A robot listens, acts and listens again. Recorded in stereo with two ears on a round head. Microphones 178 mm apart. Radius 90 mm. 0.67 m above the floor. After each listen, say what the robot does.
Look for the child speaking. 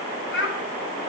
Turn 65° left.
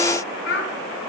Turn 55° left.
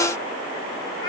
Keep listening.
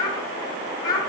Turn 20° left.
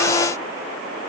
Keep listening.
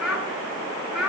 Found it: a child speaking, straight ahead, over 4 m away.